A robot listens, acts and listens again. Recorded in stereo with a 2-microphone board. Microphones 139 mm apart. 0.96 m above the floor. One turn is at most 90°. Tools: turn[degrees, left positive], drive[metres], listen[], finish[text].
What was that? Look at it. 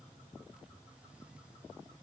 Action: listen[]
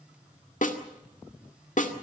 Thought: The snare drum: about 65° left or 115° left.
Action: turn[65]
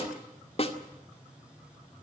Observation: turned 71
Thought: So it is at 45° left.
Action: turn[45]
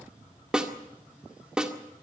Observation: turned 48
Action: finish[Found it: a snare drum, straight ahead.]